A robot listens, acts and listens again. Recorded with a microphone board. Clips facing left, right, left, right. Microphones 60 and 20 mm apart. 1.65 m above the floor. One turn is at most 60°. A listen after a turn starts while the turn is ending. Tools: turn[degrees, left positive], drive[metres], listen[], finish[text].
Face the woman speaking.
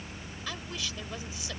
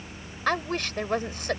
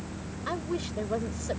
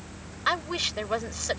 Thought: The woman speaking: about 55° right or 125° right.
Action: turn[-55]
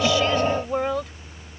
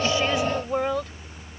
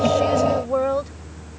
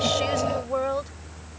Action: finish[Found it: a woman speaking, straight ahead.]